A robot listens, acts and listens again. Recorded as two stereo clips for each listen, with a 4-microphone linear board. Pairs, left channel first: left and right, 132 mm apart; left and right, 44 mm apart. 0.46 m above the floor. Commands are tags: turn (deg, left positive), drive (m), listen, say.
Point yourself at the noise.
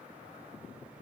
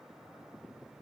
<listen/>
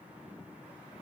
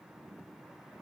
<listen/>
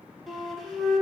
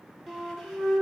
<turn deg="30"/>
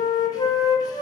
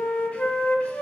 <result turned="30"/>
<turn deg="150"/>
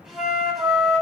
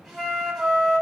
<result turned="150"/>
<say>Facing the flute, under 1 m away.</say>